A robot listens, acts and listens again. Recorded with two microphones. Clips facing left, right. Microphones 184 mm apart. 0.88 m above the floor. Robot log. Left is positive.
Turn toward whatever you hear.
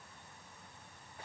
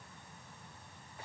cmd idle
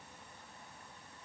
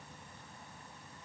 cmd idle
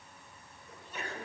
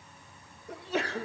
cmd yaw -90
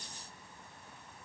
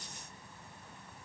end: I heard a sneeze from this way, but can't make it out now.